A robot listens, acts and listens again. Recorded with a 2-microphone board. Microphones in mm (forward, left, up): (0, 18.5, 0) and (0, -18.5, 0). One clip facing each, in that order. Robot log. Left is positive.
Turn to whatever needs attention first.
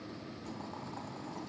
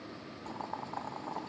cmd idle
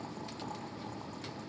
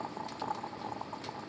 cmd idle
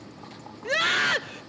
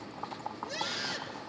note: The scream: about 55° left or 125° left.
cmd yaw +55
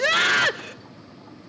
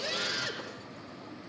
note: So it is at 70° left.
cmd yaw +70
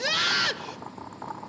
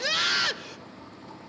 end: Found it: a scream, straight ahead.